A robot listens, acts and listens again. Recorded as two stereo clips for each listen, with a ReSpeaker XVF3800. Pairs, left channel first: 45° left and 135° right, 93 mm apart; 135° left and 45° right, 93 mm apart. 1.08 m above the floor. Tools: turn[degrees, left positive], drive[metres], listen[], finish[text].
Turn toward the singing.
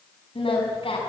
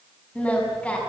Thought: The singing: 60° left.
Action: turn[60]
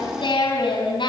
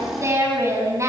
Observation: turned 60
Thought: The singing is now 15° left.
Action: turn[15]
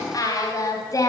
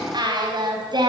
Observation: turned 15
Action: finish[Facing the singing, over 4 m away.]